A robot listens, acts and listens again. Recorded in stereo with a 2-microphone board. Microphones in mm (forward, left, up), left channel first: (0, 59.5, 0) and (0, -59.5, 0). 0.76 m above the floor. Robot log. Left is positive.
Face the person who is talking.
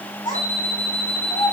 note: The child speaking: about 40° left or 140° left.
cmd yaw +40
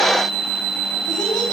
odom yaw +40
cmd idle
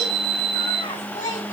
note: So it is at 100° left.
cmd yaw +100
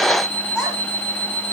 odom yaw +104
end: Found it: a child speaking, straight ahead.